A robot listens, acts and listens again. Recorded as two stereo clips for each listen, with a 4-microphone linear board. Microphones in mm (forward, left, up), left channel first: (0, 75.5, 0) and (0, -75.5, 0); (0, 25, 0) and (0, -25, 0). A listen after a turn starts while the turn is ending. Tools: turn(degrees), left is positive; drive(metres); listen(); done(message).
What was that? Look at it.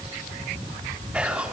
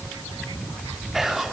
turn(degrees=-30)
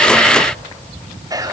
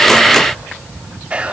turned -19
turn(degrees=-155)
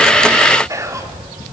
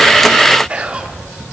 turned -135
turn(degrees=-20)
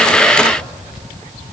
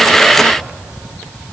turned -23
listen()
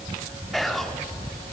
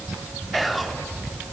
done("Found it: whispering, straight ahead.")